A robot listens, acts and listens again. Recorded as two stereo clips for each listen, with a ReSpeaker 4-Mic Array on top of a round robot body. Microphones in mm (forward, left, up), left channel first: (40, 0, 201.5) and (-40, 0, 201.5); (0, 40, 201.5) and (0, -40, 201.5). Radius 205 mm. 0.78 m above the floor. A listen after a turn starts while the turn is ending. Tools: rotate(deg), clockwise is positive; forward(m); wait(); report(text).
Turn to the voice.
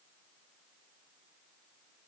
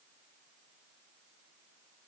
wait()
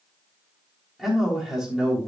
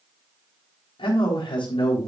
rotate(-95)
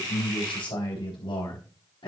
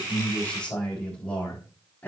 rotate(-20)
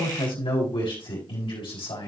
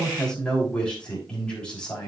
rotate(-15)
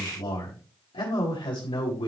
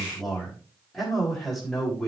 report("Found it: a man speaking, straight ahead.")